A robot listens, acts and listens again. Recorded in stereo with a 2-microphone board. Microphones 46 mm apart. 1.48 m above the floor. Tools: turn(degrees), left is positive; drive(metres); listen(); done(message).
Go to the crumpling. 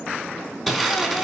turn(degrees=30)
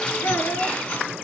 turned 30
turn(degrees=145)
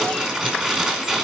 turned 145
turn(degrees=-15)
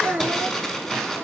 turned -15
drive(metres=1.0)
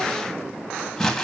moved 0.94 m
turn(degrees=10)
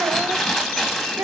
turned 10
drive(metres=1.0)
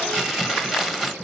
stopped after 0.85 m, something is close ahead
done("Arrived at the crumpling, straight ahead.")